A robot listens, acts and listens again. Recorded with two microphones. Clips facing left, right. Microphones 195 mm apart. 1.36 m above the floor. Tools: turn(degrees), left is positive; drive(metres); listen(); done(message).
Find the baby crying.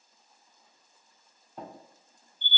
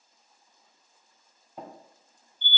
listen()
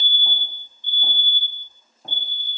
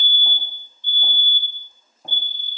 listen()
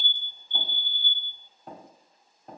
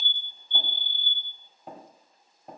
done("I can't make out a baby crying to turn to.")